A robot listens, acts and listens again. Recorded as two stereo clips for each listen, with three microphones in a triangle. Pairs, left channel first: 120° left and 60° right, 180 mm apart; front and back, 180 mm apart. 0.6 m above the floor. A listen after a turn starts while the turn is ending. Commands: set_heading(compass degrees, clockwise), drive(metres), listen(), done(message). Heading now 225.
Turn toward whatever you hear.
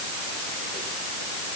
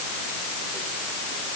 listen()
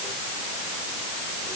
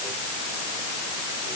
listen()
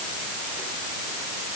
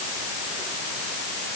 done("I can't make out anything to turn to.")